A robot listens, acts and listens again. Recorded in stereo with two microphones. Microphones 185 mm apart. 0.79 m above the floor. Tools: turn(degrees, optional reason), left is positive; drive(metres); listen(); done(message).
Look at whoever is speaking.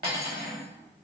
listen()
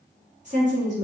turn(degrees=-40, reason="The woman speaking: about 40° right or 140° right.")
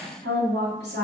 turn(degrees=-95, reason="So it is at 95° right.")
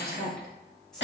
done("Found it: a woman speaking, straight ahead, 1 to 2 m away.")